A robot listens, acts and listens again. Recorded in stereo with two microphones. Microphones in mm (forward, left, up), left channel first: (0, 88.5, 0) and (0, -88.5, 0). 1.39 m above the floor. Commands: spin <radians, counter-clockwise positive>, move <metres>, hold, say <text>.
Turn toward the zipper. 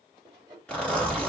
spin 0.52
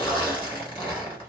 spin 2.53
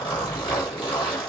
spin 0.61
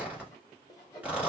spin -0.17
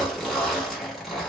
say Found it: a zipper, straight ahead, 1 to 2 m away.